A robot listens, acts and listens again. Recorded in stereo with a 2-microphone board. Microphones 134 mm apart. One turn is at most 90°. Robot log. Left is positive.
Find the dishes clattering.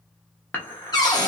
cmd yaw +30
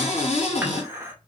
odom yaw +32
note: So it is at 20° right.
cmd yaw -20
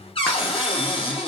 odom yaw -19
cmd idle
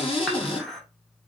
end: Facing the dishes clattering, under 1 m away.